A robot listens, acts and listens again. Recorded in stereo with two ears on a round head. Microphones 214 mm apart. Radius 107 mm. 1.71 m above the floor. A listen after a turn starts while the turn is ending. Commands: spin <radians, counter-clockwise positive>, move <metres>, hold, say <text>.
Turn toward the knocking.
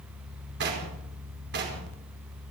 spin -0.87
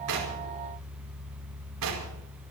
hold
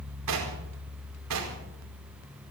spin -1.48
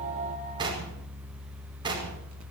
spin -0.35
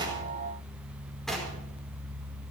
hold
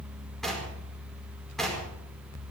say Found it: knocking, straight ahead, over 4 m away.